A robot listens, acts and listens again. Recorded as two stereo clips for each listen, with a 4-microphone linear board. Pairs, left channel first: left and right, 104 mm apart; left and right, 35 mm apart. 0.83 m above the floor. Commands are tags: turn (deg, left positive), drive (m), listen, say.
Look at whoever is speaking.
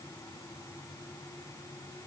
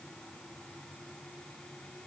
<listen/>
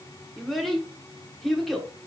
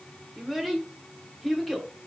<turn deg="30"/>
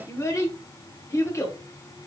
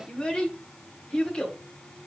<turn deg="150"/>
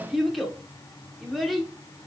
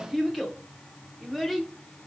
<say>Found it: a child speaking, straight ahead, under 1 m away.</say>